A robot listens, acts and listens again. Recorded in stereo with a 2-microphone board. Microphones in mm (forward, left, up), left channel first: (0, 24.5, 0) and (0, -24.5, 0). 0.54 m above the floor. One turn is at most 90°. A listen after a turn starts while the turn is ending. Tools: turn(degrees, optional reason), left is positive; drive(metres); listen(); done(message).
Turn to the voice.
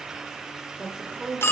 turn(degrees=-20, reason="The woman speaking: about 20° right or 160° right.")
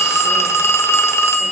listen()
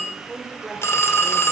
done("Found it: a woman speaking, straight ahead, 2 to 4 m away.")